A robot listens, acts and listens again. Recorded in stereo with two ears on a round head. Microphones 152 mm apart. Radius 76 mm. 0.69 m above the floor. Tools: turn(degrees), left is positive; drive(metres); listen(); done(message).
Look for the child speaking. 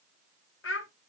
turn(degrees=90)
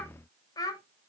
turn(degrees=25)
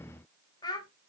turn(degrees=25)
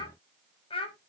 turn(degrees=35)
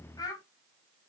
turn(degrees=25)
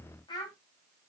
turn(degrees=25)
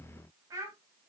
turn(degrees=-20)
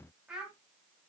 done("Facing the child speaking.")